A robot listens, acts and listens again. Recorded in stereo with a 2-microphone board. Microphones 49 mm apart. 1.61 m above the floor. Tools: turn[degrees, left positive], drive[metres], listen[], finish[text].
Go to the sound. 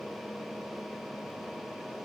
Action: listen[]
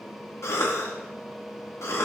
Thought: The cough: about 70° left or 110° left.
Action: turn[70]
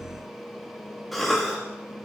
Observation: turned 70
Action: drive[1.0]
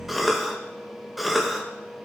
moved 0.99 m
Action: drive[1.0]
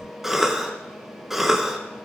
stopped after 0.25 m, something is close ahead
Action: finish[I am next to the cough.]